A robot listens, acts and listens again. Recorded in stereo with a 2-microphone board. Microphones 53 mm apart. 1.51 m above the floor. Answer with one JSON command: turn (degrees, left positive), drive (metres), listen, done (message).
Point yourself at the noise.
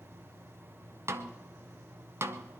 {"turn": -50}
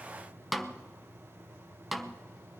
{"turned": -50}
{"done": "Found it: a snare drum, straight ahead."}